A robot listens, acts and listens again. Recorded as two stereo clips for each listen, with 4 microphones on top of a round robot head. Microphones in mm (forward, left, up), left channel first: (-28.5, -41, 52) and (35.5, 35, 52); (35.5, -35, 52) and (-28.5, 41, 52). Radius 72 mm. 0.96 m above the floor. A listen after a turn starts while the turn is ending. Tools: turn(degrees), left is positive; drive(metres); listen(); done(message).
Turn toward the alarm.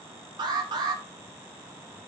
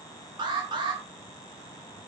turn(degrees=90)
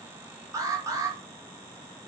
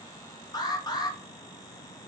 done("Facing the alarm.")